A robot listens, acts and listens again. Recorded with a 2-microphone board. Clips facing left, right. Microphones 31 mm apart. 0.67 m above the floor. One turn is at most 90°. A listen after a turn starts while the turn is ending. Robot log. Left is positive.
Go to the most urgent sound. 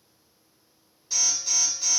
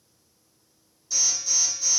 note: The alarm: about 40° left or 140° left.
cmd yaw +40
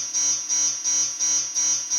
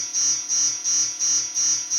note: So it is at 95° left.
cmd yaw +90
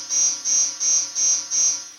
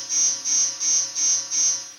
cmd fwd 1.0
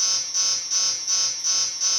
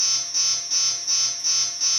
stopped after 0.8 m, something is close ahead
end: Arrived at the alarm, straight ahead.